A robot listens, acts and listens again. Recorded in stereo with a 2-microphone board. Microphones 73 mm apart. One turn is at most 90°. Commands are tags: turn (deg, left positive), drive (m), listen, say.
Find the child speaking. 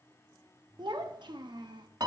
<turn deg="-70"/>
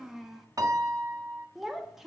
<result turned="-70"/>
<say>Facing the child speaking.</say>